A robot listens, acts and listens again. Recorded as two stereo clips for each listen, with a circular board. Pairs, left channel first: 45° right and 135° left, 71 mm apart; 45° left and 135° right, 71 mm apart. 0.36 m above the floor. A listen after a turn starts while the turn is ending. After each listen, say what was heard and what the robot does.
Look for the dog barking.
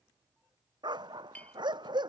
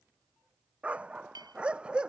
The dog barking: 150° left. Turn 150° left.
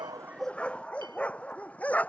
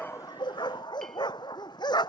The dog barking is now 25° left. Turn 25° left.
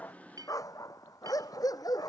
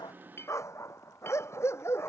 The dog barking is now 10° right. Turn 10° right.
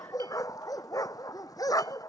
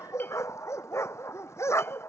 Found it: a dog barking, straight ahead.